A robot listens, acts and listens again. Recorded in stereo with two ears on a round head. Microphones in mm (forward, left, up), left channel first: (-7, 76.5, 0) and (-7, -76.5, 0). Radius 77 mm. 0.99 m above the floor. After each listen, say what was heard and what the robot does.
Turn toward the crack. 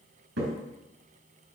Turn 90° right.
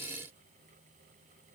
Facing where the crack came from. I can't hear it now.